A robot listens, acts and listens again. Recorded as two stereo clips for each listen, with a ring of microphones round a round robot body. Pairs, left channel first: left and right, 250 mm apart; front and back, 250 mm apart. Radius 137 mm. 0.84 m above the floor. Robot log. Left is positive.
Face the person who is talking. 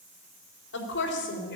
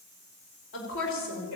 note: The woman speaking: 40° left.
cmd yaw +40
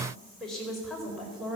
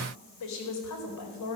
end: Found it: a woman speaking, straight ahead.